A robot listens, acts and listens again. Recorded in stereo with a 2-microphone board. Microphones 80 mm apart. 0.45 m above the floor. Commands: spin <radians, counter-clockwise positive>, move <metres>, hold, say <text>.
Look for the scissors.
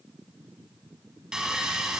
hold
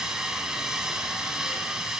hold
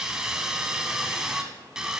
say I can't make out scissors, only sawing.